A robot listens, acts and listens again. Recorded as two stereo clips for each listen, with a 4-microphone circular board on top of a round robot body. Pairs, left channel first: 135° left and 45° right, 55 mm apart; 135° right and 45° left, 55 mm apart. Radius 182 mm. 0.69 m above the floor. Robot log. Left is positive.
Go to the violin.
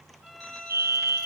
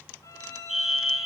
note: The violin: 135° right.
cmd yaw -135
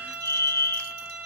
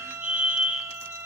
note: The violin is now 15° left.
cmd yaw +15
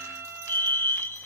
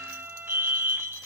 cmd fwd 1.0
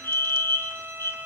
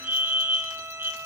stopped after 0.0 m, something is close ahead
end: Something is in my way. I am facing the violin but have not reached it.